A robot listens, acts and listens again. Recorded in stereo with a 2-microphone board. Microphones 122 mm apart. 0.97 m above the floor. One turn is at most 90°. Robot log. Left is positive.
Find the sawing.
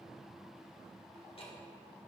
cmd idle
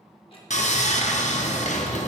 cmd yaw +90
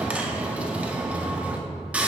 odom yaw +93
note: So it is at 10° right.
cmd yaw -10
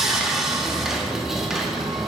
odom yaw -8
end: Facing the sawing.